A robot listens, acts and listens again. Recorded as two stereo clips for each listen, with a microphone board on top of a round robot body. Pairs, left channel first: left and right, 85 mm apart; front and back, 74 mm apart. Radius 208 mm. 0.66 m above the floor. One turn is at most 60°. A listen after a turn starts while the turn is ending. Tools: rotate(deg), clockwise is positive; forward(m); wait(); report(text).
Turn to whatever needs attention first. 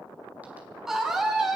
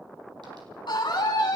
report("Facing the scream, over 4 m away.")